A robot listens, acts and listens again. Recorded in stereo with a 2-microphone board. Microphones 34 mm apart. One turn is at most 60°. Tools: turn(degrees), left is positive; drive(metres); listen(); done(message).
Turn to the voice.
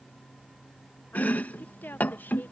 turn(degrees=60)
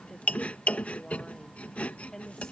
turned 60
turn(degrees=20)
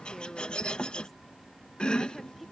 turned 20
done("Facing the woman speaking.")